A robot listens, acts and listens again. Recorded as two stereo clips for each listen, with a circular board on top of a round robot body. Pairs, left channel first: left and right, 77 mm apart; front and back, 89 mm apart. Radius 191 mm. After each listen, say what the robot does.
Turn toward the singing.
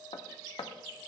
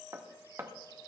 Keep listening.
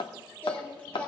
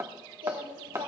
Turn 160° left.
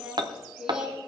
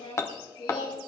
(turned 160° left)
Turn 10° right.
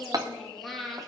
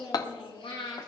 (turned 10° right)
Found it: singing, straight ahead.